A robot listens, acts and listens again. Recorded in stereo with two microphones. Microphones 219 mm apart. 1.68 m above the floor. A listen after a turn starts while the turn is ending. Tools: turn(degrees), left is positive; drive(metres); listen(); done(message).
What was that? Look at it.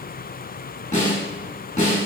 turn(degrees=35)
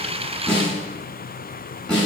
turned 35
done("Found it: a snare drum, straight ahead, 1 to 2 m away.")